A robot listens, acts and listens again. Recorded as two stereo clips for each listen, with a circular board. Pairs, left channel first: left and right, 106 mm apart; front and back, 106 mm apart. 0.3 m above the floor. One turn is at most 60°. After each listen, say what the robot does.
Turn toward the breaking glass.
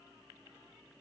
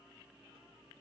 Keep listening.
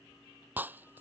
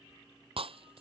Turn 60° right.
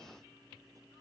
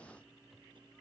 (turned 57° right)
Turn 60° right.
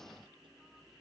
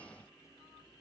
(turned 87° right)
Turn 15° right.
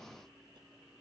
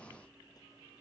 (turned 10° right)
I heard breaking glass from this way, but can't make it out now.